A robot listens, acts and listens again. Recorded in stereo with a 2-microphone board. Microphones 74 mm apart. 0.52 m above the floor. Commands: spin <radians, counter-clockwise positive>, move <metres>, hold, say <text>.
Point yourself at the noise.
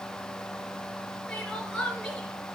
spin 0.52
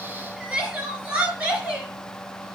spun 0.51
spin -0.35
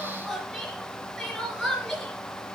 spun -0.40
say Found it: crying, straight ahead.